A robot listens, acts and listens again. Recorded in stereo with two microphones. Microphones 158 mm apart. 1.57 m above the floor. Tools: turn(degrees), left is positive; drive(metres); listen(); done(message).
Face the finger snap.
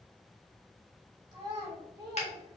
turn(degrees=45)
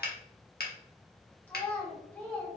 turn(degrees=90)
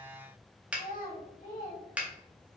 turn(degrees=-10)
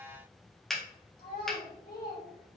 done("Found it: a finger snap, straight ahead.")